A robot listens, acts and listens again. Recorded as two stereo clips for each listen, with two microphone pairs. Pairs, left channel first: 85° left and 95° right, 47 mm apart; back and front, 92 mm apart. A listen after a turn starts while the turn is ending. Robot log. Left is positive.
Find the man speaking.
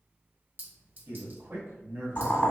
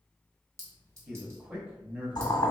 note: The man speaking: 70° right.
cmd yaw -70
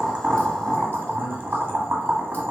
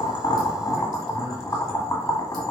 cmd idle
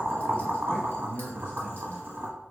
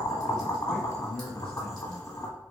note: The man speaking is now 105° left.
cmd yaw +105
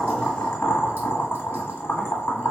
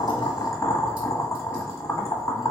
cmd idle
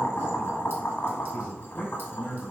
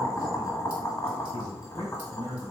end: Facing the man speaking.